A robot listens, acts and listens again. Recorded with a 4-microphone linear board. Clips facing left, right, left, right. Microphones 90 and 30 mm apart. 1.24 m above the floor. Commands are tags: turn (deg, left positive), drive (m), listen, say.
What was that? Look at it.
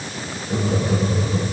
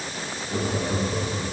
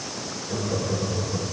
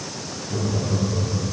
<turn deg="50"/>
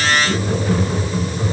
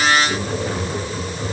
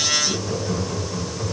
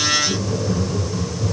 <say>Facing the laughter.</say>